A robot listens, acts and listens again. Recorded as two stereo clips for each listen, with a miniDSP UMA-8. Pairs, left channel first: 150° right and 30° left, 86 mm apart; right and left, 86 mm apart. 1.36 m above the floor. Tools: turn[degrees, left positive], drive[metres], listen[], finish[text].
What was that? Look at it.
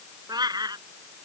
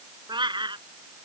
Thought: The cat meowing: 65° left.
Action: turn[65]
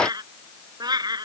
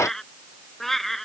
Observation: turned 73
Action: finish[Found it: a cat meowing, straight ahead.]